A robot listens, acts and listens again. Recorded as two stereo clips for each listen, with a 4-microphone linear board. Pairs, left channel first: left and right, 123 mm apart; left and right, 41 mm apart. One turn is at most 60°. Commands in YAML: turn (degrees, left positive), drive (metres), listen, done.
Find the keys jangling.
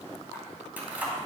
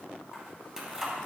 turn: -30
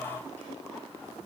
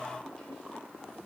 listen: true
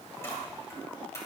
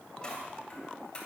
turn: 25
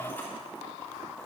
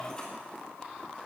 turn: 15
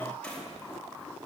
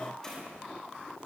turn: 10
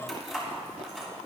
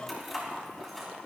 done: "Facing the keys jangling."